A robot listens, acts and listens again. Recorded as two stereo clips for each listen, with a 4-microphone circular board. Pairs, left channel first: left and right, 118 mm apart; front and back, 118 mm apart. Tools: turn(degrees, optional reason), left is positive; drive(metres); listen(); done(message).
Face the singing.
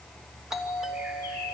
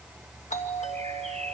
listen()
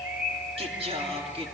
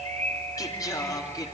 turn(degrees=-55, reason="The singing: 55° right.")
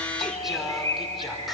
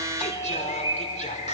done("Found it: singing, straight ahead, over 4 m away.")